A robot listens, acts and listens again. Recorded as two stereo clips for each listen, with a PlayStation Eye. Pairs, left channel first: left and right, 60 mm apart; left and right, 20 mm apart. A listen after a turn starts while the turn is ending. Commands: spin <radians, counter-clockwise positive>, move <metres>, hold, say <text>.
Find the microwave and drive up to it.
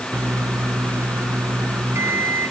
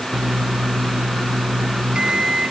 spin -0.87
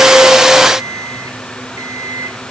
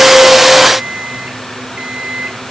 spin -1.40
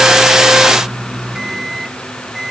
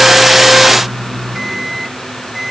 move 1.0
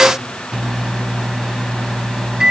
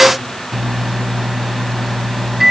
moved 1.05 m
spin -0.17
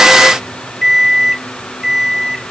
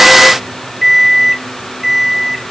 move 1.0
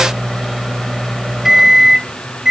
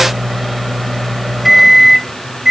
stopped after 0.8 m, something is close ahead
spin -0.17
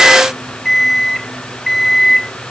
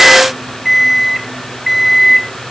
say Arrived at the microwave, straight ahead.